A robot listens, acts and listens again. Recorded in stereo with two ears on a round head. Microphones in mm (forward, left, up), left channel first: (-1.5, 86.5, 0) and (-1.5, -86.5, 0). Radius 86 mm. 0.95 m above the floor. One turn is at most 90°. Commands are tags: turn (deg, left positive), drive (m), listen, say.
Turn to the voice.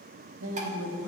<turn deg="-90"/>
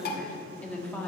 <turn deg="10"/>
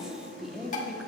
<say>Facing the woman speaking, 1 to 2 m away.</say>